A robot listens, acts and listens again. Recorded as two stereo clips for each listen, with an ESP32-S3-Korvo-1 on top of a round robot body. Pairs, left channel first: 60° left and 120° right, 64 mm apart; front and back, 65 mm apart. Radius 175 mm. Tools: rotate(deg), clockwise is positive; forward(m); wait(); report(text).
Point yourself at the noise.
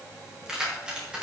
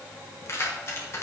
rotate(45)
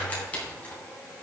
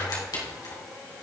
rotate(10)
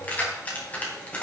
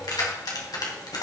rotate(10)
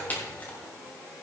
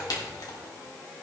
report("Found it: keys jangling, straight ahead.")